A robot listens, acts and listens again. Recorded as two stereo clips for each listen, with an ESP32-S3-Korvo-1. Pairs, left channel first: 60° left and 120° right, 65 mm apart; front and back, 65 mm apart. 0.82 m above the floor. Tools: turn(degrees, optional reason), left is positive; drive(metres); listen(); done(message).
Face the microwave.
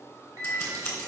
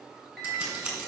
turn(degrees=-85, reason="The microwave: 85° right.")
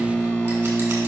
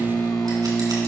turn(degrees=-10, reason="The microwave is now 10° right.")
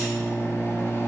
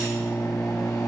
done("Facing the microwave.")